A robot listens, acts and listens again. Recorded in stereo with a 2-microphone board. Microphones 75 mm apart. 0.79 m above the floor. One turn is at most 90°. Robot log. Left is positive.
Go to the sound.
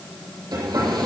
note: The hair dryer: about 75° right or 105° right.
cmd yaw -75
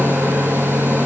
note: So it is at 30° right.
cmd yaw -30
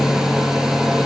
cmd fwd 1.0
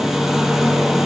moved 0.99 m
cmd fwd 1.0
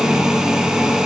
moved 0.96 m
cmd fwd 1.0
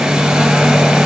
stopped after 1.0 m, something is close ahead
end: I am next to the hair dryer.